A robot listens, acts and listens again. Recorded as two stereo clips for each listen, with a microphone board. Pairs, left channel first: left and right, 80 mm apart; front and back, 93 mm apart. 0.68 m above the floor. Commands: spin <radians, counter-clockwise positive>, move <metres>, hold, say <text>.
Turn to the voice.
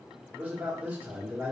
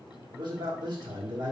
spin -2.79
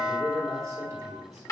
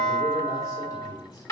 spin -0.87
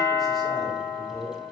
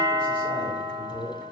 say Found it: a man speaking, straight ahead, 1 to 2 m away.